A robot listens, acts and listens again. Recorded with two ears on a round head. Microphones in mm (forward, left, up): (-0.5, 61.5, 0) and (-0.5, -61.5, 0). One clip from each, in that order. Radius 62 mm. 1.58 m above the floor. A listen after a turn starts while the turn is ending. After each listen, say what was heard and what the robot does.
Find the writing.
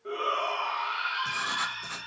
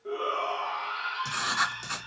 The writing: about 55° right or 125° right. Turn 55° right.
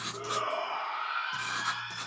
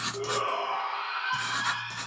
So it is at 35° right. Turn 35° right.
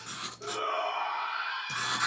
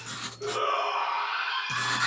Found it: writing, straight ahead, 2 to 4 m away.